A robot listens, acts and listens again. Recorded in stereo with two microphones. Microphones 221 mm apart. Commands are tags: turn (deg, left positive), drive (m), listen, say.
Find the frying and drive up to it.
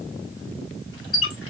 <listen/>
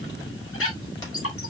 <listen/>
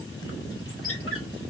<say>I can't make out frying, only a squeak.</say>